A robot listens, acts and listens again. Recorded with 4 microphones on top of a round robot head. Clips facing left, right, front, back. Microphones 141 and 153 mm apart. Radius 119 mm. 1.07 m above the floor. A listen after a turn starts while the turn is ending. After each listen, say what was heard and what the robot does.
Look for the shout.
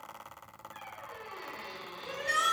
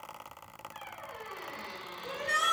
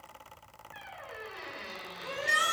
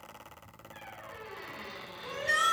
The shout: 80° left. Turn 80° left.
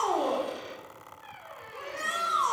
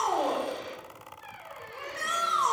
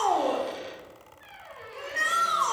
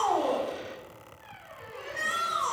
The shout is now 10° left. Turn 10° left.
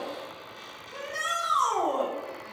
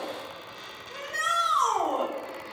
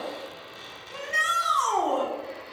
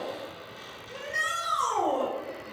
Found it: a shout, straight ahead.